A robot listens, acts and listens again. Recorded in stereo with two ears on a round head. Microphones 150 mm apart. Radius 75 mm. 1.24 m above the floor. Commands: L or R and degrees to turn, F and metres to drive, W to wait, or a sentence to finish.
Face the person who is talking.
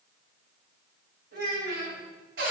R60
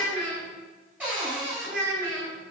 R55
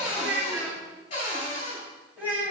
R10
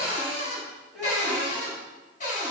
Facing the child speaking.